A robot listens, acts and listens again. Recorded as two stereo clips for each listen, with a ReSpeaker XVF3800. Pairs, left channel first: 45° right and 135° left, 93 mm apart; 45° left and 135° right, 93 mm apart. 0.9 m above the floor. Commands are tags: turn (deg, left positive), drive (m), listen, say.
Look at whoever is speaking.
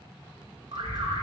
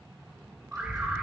<turn deg="-90"/>
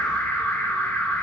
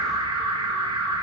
<listen/>
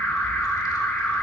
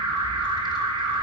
<listen/>
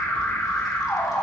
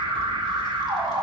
<say>I heard a child speaking from this way, but can't make it out now.</say>